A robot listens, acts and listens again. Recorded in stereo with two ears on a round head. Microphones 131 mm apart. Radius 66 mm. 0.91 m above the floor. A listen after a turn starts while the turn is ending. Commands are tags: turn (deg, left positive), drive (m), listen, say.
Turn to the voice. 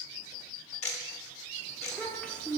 <turn deg="30"/>
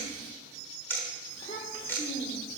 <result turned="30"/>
<turn deg="145"/>
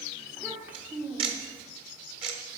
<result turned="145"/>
<turn deg="-10"/>
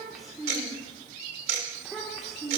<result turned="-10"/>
<say>Found it: a child speaking, straight ahead, 1 to 2 m away.</say>